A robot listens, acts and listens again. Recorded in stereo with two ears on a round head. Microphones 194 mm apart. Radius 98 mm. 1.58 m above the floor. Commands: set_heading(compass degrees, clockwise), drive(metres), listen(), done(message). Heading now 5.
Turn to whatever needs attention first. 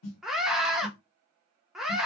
set_heading(335)
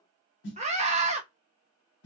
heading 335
set_heading(5)
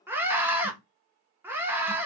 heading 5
set_heading(15)
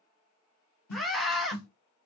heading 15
done("Found it: a scream, straight ahead, under 1 m away.")